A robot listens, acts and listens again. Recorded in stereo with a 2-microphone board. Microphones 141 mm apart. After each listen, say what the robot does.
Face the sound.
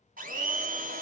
Turn 75° right.
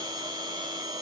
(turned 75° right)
Turn 30° right.
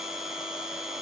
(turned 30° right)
Facing the blender.